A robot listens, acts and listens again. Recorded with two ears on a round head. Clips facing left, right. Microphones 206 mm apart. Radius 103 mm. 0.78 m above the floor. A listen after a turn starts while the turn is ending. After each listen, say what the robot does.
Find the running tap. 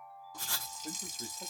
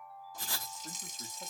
Turn 70° left.
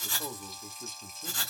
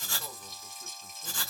Facing the running tap, 1 to 2 m away.